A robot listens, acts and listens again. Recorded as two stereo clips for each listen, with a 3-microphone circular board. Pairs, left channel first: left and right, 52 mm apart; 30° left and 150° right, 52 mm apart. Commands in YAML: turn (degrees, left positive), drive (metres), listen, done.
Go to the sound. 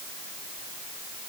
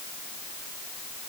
listen: true
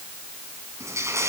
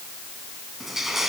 turn: -65
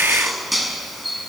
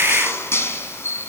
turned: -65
drive: 1.0
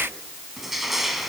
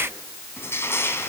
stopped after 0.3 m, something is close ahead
done: "Something is in my way. I am facing the crushing but have not reached it."